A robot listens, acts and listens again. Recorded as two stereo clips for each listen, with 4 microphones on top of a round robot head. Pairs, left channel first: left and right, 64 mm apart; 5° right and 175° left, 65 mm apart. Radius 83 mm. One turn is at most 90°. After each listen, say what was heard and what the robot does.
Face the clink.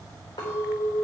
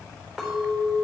The clink: 85° left. Turn 85° left.
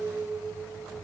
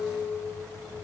The clink is now 30° left. Turn 30° left.
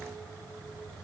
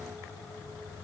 Keep listening.
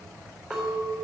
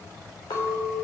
Facing the clink, over 4 m away.